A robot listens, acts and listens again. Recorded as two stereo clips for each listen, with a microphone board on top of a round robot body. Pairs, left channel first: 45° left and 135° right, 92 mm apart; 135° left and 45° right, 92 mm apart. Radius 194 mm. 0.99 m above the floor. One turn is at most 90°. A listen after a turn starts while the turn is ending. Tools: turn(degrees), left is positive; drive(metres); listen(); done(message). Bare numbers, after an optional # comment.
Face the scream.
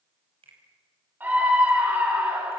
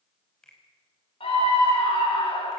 # The scream: 155° left.
turn(90)
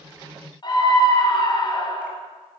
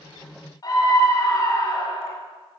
# The scream is now 85° left.
turn(85)
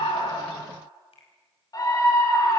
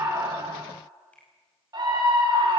done("Facing the scream, over 4 m away.")